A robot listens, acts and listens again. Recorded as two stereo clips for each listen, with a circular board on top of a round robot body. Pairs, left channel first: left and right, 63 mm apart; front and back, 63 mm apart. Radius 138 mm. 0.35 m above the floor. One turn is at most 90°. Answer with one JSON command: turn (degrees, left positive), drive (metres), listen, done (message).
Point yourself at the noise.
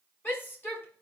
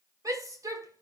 {"turn": 90}
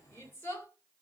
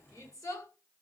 {"turn": 35}
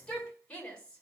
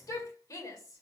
{"turn": 20}
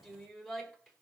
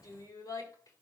{"done": "Facing the shout, over 4 m away."}